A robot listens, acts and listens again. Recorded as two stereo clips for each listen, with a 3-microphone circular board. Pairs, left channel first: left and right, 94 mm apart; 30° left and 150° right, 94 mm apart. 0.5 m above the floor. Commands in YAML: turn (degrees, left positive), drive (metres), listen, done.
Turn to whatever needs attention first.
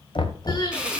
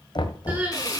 turn: 135
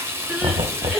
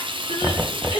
done: "Facing the crying, over 4 m away."